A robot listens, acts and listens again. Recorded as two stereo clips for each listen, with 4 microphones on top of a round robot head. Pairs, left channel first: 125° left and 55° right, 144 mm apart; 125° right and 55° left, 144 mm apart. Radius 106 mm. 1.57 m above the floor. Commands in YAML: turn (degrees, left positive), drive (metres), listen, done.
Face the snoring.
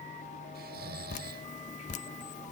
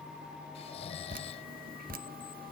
turn: -70
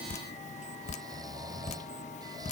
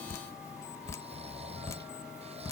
turn: 10
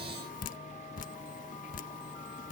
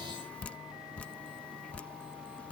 listen: true
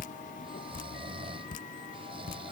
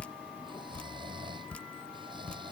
done: "Facing the snoring."